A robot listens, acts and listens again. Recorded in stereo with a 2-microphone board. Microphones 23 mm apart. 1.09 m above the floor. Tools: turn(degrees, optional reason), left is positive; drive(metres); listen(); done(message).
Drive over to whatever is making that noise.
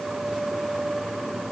listen()
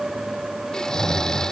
turn(degrees=25, reason="The snoring: about 25° left or 155° left.")
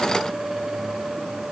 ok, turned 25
listen()
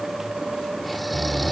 drive(metres=1.0)
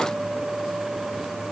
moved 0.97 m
listen()
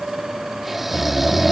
turn(degrees=-10, reason="The snoring is now 10° right.")
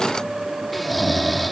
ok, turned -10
drive(metres=1.0)
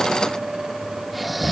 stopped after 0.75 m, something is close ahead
done("Arrived at the snoring, straight ahead.")